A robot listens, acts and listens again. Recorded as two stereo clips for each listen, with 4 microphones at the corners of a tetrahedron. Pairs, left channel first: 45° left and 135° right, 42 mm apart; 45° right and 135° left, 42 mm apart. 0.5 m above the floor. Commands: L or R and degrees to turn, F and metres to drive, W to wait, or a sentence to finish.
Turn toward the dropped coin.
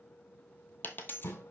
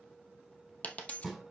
L10
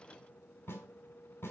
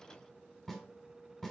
I heard a dropped coin from this way, but can't make it out now.